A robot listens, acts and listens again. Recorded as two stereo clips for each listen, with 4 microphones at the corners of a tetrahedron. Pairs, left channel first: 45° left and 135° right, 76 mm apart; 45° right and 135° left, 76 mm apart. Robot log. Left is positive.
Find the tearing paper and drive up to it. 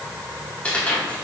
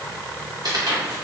note: The tearing paper: 120° left.
cmd yaw +120
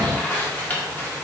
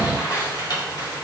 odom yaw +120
note: The tearing paper is now 20° right.
cmd yaw -20
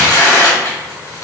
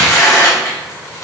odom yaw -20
cmd fwd 1.0
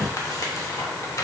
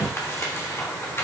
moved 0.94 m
note: The tearing paper is now 10° left.
cmd yaw +10
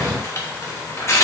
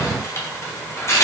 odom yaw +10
cmd fwd 1.0
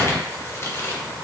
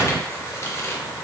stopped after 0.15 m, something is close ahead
cmd idle
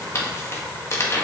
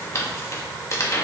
end: I am next to the tearing paper.